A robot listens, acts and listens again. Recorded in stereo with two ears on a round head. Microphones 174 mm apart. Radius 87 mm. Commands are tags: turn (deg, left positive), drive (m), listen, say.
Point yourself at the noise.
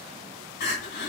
<turn deg="45"/>
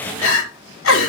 <turn deg="85"/>
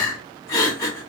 <turn deg="20"/>
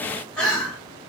<say>Facing the crying.</say>